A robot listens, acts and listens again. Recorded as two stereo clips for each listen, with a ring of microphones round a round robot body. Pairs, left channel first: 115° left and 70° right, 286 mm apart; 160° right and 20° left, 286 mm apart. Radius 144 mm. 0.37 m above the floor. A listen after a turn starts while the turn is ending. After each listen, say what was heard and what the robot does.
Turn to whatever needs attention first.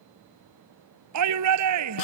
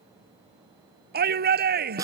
The shout: 35° right. Turn 35° right.
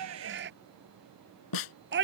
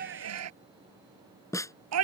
The shout is now 15° right. Turn 15° right.
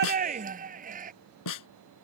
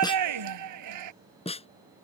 Found it: a shout, straight ahead.